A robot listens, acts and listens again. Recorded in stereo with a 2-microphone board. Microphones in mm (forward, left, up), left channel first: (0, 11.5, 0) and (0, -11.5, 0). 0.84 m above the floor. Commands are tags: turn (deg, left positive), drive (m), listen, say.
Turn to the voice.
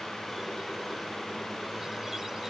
<listen/>
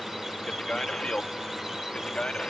<turn deg="50"/>
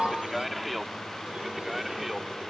<turn deg="-10"/>
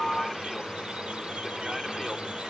<listen/>
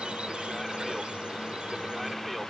<listen/>
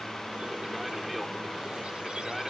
<say>I heard a man speaking from this way, but can't make it out now.</say>